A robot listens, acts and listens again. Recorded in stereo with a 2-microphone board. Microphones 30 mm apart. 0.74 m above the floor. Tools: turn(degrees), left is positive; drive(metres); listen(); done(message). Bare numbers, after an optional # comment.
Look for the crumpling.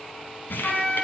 turn(90)
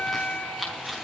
done("Facing the crumpling.")